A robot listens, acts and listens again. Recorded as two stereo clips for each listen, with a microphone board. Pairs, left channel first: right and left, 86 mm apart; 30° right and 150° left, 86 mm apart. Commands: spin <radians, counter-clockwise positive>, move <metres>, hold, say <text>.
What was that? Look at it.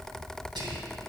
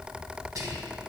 spin 1.83
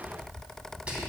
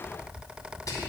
spin 0.26
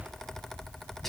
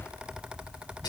say Found it: whispering, straight ahead, 2 to 4 m away.